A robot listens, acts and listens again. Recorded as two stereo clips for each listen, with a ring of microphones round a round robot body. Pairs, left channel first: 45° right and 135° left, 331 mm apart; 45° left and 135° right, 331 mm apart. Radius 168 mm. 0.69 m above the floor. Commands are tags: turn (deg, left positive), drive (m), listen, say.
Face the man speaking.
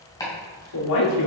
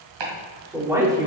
<turn deg="-60"/>
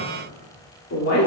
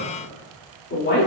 <turn deg="-10"/>
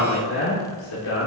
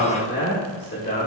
<turn deg="-15"/>
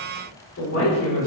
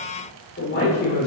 <turn deg="-10"/>
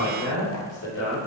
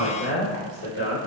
<say>Found it: a man speaking, straight ahead, 2 to 4 m away.</say>